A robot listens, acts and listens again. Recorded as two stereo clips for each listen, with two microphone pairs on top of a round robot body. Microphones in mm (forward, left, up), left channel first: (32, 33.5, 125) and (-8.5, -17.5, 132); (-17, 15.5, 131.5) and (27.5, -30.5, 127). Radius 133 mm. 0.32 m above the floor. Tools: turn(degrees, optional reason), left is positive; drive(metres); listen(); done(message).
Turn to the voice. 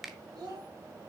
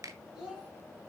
turn(degrees=-125, reason="The child speaking: 125° right.")
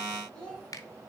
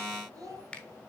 turn(degrees=-25, reason="The child speaking is now 25° right.")
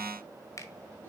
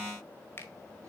listen()
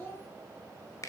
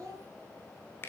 turn(degrees=-10, reason="The child speaking is now 10° right.")
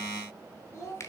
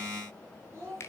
done("Found it: a child speaking, straight ahead.")